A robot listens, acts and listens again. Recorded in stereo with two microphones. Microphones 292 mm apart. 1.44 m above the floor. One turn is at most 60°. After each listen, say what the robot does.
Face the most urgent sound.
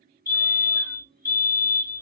Turn 30° right.
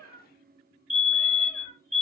Turn 15° left.
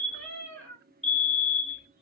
Facing the fire alarm.